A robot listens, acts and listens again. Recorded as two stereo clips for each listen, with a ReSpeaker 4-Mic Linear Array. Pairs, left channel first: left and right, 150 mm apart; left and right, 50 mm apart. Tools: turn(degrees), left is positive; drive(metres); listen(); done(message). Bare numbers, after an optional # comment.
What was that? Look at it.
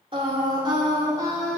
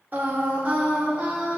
# The singing: about 20° right or 160° right.
turn(-20)
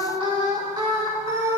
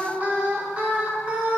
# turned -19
# The singing: about 20° right or 160° right.
turn(-20)
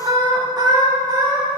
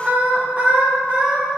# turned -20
# The singing: about 25° right or 155° right.
turn(-25)
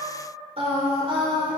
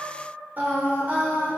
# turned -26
# The singing: about 35° right or 145° right.
turn(-35)
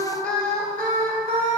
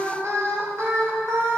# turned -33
# So it is at 110° right.
turn(-110)
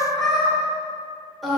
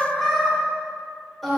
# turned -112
done("Found it: singing, straight ahead.")